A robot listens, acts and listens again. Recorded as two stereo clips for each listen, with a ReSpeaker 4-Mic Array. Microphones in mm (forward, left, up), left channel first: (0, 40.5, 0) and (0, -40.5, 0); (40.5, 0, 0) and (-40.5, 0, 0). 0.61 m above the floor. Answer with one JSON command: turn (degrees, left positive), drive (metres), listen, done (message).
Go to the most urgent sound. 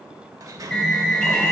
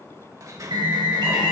{"turn": 170}
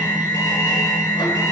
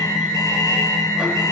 {"turn": 50}
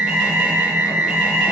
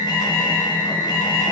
{"turn": -10}
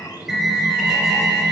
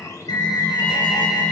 {"drive": 1.0}
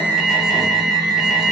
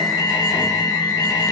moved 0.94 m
{"drive": 1.0}
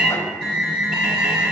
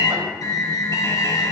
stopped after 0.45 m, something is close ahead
{"turn": -10}
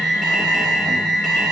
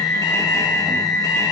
{"done": "Arrived at the alarm, straight ahead."}